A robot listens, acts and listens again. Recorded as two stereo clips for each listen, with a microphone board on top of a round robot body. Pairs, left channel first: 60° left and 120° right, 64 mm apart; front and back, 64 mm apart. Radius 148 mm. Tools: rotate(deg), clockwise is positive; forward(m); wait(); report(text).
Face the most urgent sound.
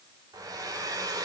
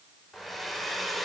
wait()
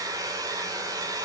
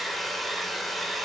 wait()
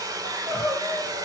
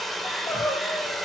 rotate(35)
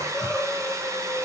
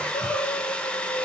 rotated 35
rotate(20)
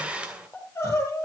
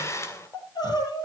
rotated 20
report("Found it: crying, straight ahead, over 4 m away.")